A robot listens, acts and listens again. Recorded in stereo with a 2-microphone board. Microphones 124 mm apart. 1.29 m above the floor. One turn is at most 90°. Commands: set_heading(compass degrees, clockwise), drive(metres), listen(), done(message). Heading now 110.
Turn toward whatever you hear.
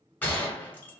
set_heading(80)
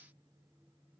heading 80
listen()
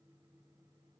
done("I heard a gunshot, but can't make it out now. It was about 15° right or 135° left.")